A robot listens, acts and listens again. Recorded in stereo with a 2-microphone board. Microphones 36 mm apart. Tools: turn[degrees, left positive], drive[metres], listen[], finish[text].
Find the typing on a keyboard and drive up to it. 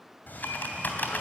Thought: The typing on a keyboard: about 55° left or 125° left.
Action: turn[55]
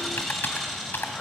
Thought: So it is at 65° left.
Action: turn[65]
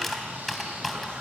Action: drive[1.0]
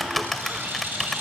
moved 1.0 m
Action: drive[1.0]
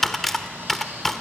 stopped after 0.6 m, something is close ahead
Thought: The typing on a keyboard is now 10° left.
Action: turn[10]
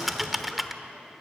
Action: finish[I am next to the typing on a keyboard.]